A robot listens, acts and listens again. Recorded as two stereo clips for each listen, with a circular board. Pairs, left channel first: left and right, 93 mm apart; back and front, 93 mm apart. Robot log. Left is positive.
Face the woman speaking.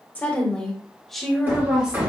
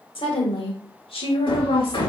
note: The woman speaking: 170° right.
cmd yaw -170
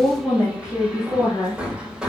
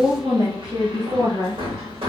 note: The woman speaking is now 30° left.
cmd yaw +30
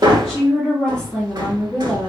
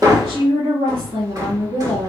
end: Found it: a woman speaking, straight ahead, 2 to 4 m away.